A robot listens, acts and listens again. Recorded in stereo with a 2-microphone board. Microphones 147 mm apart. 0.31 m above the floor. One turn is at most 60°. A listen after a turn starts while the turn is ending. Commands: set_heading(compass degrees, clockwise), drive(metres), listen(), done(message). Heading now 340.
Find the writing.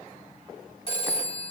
listen()
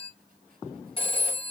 listen()
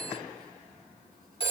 done("I can't make out writing, only a phone ringing.")